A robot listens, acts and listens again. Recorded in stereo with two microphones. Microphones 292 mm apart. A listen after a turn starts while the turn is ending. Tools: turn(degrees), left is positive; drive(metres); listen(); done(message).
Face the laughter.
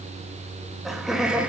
turn(degrees=-30)
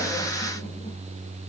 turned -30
listen()
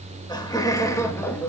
turn(degrees=30)
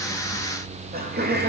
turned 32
turn(degrees=-35)
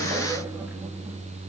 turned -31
listen()
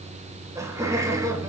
turn(degrees=-10)
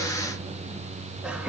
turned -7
done("Facing the laughter, 2 to 4 m away.")